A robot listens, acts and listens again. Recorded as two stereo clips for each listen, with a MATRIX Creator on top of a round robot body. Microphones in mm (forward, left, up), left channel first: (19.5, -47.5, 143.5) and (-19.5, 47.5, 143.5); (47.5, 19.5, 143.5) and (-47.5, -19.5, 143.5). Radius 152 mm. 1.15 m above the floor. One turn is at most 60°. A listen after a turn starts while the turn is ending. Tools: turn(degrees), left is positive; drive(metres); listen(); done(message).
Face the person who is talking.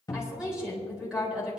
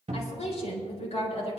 turn(degrees=30)
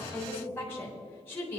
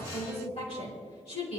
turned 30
done("Found it: a woman speaking, straight ahead.")